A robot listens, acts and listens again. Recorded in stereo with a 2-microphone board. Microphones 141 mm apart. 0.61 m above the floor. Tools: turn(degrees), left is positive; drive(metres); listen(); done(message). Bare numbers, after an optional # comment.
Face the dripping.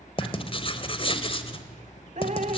# The dripping: about 60° right or 120° right.
turn(-60)
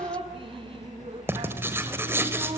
# So it is at 45° right.
turn(-45)
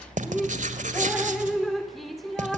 done("Facing the dripping.")